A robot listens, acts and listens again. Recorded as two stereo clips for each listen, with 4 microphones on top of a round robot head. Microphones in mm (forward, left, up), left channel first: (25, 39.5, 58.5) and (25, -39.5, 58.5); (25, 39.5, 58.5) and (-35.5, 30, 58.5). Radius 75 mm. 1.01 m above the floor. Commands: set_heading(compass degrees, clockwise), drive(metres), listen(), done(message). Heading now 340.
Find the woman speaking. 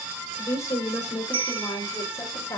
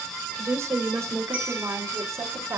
set_heading(190)
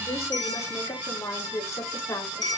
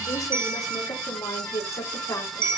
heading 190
set_heading(150)
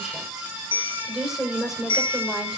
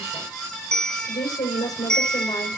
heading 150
done("Found it: a woman speaking, straight ahead, over 4 m away.")